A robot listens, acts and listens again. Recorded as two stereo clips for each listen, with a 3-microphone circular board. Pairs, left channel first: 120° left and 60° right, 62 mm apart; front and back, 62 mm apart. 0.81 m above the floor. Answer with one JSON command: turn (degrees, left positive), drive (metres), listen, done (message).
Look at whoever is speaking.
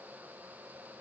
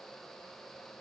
{"listen": true}
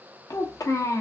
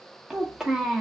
{"turn": 100}
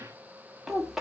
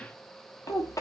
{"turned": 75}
{"turn": 25}
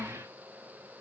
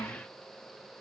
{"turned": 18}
{"done": "Found it: a child speaking, straight ahead."}